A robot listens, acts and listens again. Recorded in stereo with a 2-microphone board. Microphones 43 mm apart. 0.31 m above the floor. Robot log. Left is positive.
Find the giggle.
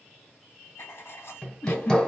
note: The giggle: about 50° left or 130° left.
cmd yaw +50
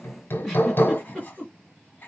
end: Facing the giggle, 2 to 4 m away.